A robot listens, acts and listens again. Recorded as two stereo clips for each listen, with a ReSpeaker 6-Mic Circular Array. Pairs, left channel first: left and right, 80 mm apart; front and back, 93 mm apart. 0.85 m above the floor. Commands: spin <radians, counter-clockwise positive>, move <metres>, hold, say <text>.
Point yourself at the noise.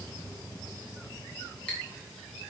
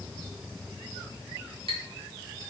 spin 2.88
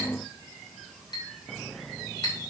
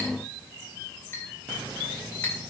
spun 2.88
spin 1.13
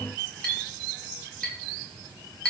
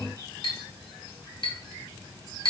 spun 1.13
spin 0.17
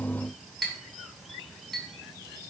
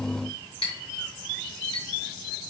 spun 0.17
say Found it: a clink, straight ahead.